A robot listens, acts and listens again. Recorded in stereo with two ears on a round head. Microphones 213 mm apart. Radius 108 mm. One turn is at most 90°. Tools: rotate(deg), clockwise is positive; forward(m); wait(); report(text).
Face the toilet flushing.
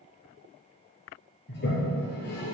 rotate(-45)
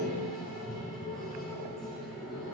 report("Facing the toilet flushing, 2 to 4 m away.")